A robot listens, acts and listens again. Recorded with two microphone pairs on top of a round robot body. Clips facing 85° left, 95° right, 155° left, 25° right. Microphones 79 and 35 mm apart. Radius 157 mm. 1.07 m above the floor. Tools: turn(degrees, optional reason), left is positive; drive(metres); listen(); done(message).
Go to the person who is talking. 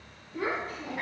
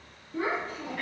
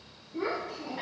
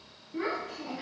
turn(degrees=-55, reason="The child speaking: 55° right.")
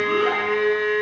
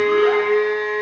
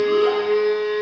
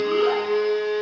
listen()
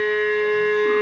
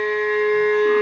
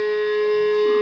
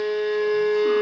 listen()
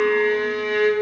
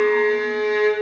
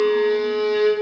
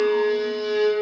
done("Facing where the child speaking came from. I can't hear it now. I did not reach it.")